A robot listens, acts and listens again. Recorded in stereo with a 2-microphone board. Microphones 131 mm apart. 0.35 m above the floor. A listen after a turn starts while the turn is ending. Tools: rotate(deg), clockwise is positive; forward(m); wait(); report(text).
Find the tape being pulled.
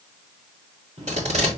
rotate(65)
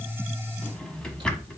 wait()
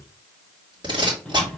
rotate(40)
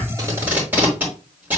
rotate(15)
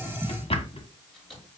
wait()
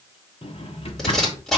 report("Facing the tape being pulled, over 4 m away.")